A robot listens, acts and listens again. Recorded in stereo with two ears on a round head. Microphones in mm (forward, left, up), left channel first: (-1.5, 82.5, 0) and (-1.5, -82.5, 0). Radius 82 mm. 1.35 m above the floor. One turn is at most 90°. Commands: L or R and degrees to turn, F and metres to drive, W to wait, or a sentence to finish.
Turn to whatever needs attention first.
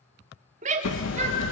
R40
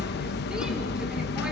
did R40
W
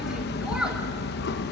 W
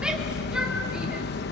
I heard a shout, but can't make it out now. It was about straight ahead or 100° right.